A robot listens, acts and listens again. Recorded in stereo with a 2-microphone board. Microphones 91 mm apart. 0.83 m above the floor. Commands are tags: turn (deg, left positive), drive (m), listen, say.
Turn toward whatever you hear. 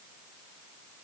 <listen/>
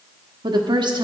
<turn deg="-55"/>
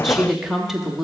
<say>Facing the woman speaking, 1 to 2 m away.</say>